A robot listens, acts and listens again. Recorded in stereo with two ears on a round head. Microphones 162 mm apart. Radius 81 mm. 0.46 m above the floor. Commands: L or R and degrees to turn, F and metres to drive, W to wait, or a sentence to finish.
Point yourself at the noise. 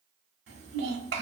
R60
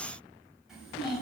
Facing the child speaking.